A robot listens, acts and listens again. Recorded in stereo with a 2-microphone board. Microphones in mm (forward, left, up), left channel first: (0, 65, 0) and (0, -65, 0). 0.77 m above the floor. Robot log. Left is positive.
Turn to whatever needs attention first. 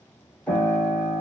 cmd idle
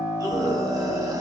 note: The scream: about 25° right or 155° right.
cmd yaw -25
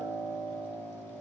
cmd idle
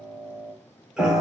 cmd idle
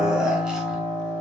end: I heard a scream, but can't make it out now. It was about straight ahead or 130° right.